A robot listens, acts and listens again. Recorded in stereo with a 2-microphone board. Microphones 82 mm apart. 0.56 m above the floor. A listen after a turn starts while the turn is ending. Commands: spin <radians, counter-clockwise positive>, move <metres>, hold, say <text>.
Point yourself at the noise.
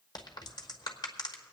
spin 1.05
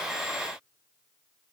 hold
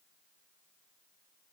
say I heard a crack, but can't make it out now. It was about straight ahead or 60° left.